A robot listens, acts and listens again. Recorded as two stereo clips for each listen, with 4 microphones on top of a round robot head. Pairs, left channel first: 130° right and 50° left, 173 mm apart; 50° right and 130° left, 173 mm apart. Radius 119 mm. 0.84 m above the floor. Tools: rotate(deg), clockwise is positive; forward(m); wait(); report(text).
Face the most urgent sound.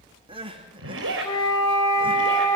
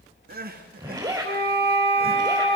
rotate(-105)
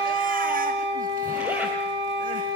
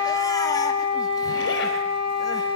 wait()
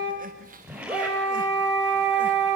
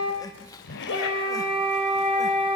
rotate(-15)
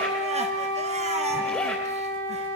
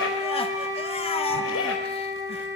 wait()
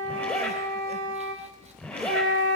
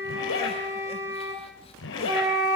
wait()
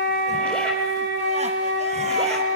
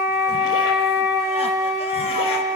report("I heard crying from this way, but can't make it out now.")